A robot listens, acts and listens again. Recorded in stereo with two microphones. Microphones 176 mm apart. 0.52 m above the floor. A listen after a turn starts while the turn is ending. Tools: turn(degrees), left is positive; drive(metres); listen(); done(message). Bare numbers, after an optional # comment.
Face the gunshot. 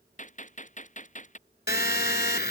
# The gunshot: about 45° left or 135° left.
turn(45)
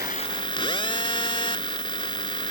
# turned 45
listen()
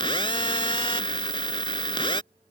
done("I heard a gunshot, but can't make it out now. It was about straight ahead or 90° left.")